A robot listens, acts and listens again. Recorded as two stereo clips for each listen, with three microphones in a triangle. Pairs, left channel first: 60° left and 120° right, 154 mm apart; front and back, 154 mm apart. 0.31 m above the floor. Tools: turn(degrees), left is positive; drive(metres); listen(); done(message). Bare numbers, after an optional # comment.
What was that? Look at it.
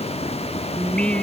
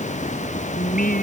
# The singing: 25° right.
turn(-25)
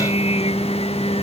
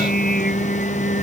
# The singing is now 10° left.
turn(10)
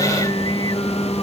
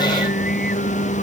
done("Found it: singing, straight ahead.")